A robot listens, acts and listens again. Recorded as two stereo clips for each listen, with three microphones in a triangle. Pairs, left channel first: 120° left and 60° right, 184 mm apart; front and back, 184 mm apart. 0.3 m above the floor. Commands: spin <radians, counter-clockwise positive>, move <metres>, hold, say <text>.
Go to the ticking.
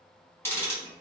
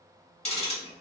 spin 0.79
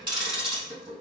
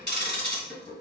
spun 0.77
move 1.0
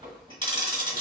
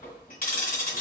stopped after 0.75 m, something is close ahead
say I am next to the ticking.